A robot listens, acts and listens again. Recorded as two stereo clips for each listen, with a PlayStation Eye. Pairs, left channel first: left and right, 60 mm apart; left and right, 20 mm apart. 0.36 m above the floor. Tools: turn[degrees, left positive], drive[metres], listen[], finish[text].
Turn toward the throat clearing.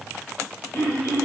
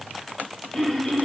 Thought: The throat clearing: about 55° left or 125° left.
Action: turn[55]
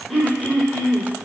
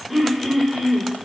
Action: finish[Facing the throat clearing.]